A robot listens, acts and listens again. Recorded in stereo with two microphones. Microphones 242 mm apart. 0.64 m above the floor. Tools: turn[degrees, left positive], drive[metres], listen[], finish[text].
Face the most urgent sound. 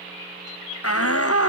Thought: The shout: about 65° left or 115° left.
Action: turn[65]
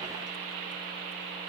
Action: listen[]
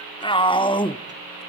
Thought: So it is at 20° left.
Action: turn[20]
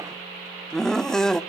Action: finish[Facing the shout, 1 to 2 m away.]